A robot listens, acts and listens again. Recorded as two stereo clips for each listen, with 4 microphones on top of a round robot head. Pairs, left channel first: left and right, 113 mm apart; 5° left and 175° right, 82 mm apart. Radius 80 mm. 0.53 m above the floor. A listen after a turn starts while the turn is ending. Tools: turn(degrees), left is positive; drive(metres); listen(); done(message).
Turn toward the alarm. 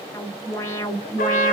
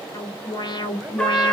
turn(degrees=25)
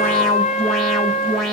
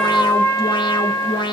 done("Facing the alarm, 1 to 2 m away.")